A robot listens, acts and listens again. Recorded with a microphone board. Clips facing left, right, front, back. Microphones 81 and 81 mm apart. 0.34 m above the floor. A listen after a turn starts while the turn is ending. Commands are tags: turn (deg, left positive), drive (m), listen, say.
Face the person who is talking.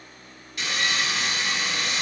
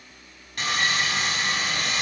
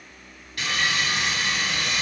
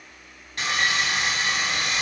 <listen/>
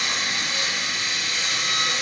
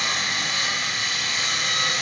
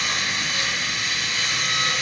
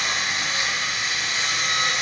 <listen/>
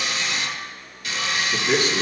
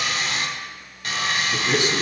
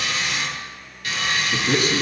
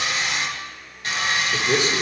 <turn deg="-20"/>
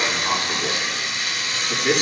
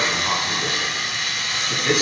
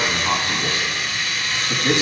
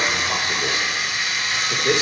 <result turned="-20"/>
<say>Found it: a man speaking, straight ahead, 2 to 4 m away.</say>